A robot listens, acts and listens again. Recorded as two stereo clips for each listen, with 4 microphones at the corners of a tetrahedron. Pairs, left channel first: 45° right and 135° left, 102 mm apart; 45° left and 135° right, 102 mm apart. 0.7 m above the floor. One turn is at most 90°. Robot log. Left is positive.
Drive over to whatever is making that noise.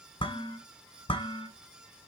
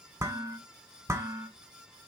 note: The dishes clattering: 75° right.
cmd yaw -75
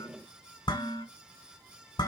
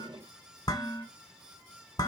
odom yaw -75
cmd fwd 1.0
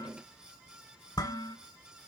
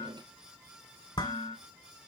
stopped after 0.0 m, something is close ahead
end: Something is in my way. I am facing the dishes clattering but have not reached it.